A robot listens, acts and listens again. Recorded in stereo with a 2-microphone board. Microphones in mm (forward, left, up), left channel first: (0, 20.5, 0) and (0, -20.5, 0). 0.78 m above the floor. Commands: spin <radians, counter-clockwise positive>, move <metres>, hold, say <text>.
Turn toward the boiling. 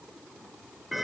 hold
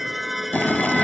spin 0.87
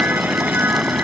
say Facing the boiling.